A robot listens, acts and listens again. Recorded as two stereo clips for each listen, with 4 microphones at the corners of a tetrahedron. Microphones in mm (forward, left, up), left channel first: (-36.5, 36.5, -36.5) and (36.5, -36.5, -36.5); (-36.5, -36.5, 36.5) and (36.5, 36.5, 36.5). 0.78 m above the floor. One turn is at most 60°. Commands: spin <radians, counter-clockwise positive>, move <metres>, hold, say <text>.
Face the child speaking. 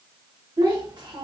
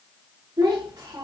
spin -0.17
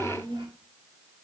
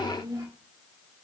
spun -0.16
spin -0.17
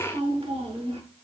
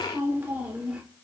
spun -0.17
spin -0.61
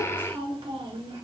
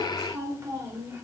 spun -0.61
spin -0.35
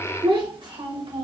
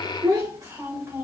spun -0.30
spin -0.26
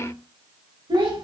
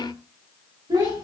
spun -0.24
say Facing the child speaking.